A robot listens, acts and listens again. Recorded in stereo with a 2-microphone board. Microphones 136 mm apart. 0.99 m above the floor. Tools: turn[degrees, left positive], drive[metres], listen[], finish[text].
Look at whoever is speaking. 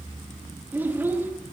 Action: turn[-30]
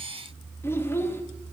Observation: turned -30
Thought: So it is at 15° left.
Action: turn[15]
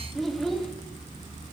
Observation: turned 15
Action: finish[Found it: a child speaking, straight ahead.]